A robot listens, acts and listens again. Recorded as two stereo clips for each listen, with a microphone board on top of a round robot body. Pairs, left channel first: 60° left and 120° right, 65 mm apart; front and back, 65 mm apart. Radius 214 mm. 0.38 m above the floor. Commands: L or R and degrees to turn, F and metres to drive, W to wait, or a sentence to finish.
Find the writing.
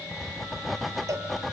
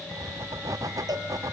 L150
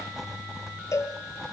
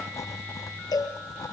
R35
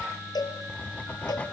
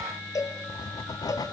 R10
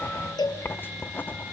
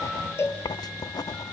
Found it: writing, straight ahead.